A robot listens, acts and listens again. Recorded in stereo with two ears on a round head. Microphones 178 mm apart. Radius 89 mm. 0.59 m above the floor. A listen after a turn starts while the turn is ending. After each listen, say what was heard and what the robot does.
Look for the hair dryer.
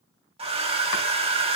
The hair dryer: about 30° right or 150° right. Turn 30° right.
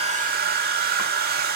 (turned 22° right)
So it is at 125° right. Turn 125° right.
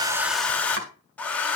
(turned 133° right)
The hair dryer is now 10° left. Turn 10° left.
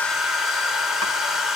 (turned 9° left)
Facing the hair dryer, 1 to 2 m away.